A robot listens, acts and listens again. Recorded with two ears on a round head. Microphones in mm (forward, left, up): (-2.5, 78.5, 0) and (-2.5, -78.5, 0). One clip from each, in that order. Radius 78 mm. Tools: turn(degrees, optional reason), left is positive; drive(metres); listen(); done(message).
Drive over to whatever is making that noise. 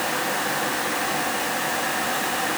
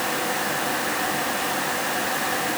listen()
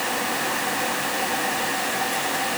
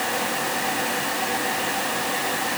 listen()
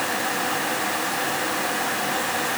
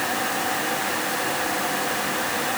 done("I can't make out anything.")